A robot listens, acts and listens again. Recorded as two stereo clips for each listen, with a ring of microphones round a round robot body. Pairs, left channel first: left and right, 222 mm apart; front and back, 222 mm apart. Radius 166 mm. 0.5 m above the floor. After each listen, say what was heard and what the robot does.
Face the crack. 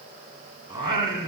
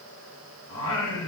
Keep listening.
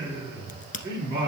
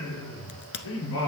The crack: 35° left. Turn 35° left.
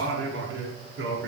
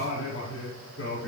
I heard a crack from this way, but can't make it out now.